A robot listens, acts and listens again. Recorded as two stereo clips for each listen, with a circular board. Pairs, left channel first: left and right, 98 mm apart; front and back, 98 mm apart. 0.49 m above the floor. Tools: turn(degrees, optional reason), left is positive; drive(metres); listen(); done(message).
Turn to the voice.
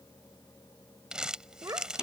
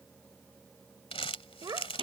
turn(degrees=-140, reason="The child speaking: 140° right.")
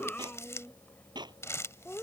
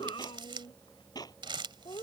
turn(degrees=20, reason="The child speaking is now 20° left.")
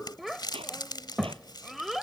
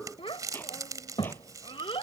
done("Facing the child speaking.")